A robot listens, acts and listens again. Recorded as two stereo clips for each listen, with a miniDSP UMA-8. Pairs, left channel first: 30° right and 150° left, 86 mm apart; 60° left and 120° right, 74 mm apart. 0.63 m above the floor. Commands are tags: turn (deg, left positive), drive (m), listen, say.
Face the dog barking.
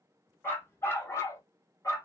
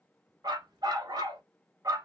<turn deg="-80"/>
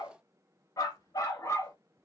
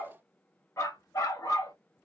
<turn deg="25"/>
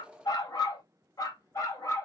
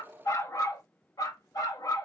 <turn deg="25"/>
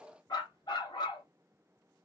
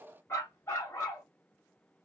<say>Facing the dog barking.</say>